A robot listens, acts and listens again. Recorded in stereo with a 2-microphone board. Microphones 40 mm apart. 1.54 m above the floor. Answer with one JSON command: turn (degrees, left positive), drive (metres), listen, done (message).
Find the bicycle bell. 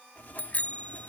{"turn": 40}
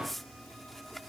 {"listen": true}
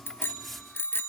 {"turn": 100}
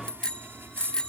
{"turn": 20}
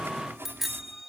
{"done": "Found it: a bicycle bell, straight ahead."}